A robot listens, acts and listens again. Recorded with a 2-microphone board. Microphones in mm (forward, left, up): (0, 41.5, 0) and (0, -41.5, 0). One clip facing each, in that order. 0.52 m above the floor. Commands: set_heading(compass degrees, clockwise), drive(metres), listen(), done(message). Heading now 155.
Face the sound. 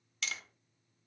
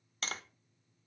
set_heading(195)
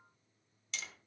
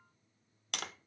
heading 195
set_heading(290)
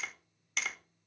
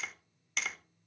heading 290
done("Found it: tapping, straight ahead, under 1 m away.")